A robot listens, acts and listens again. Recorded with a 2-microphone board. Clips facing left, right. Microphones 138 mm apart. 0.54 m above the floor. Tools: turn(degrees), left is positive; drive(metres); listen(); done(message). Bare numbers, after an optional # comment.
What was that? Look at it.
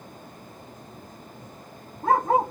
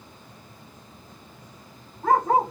# The dog barking: about 25° left or 155° left.
turn(25)
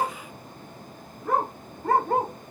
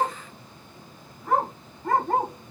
# So it is at 120° left.
turn(120)
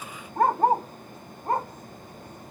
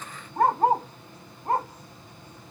# The dog barking is now 15° left.
turn(15)
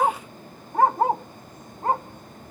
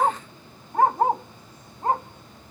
done("Found it: a dog barking, straight ahead, over 4 m away.")